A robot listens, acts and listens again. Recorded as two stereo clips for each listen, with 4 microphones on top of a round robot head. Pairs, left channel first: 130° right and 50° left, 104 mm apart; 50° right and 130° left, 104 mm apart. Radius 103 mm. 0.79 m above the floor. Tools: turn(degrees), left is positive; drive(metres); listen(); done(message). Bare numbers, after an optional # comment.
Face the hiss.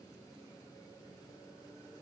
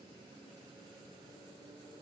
listen()
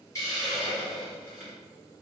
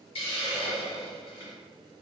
# The hiss: 70° right.
turn(-70)
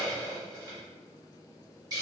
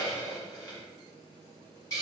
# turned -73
done("Facing the hiss, 1 to 2 m away.")